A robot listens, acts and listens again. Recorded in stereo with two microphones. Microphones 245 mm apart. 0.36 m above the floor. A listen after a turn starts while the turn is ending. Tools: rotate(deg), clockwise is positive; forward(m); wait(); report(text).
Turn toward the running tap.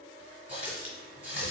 rotate(35)
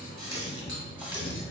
rotate(10)
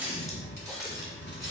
report("Facing the running tap.")